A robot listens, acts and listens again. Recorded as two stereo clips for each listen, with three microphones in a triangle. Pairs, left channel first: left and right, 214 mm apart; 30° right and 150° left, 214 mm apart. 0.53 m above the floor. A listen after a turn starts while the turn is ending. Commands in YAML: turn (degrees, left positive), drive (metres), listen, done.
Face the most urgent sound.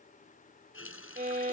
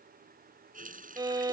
listen: true
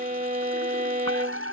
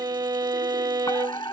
turn: -100
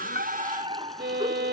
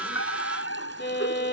turn: -25
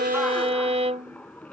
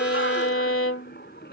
done: "Facing the fire alarm."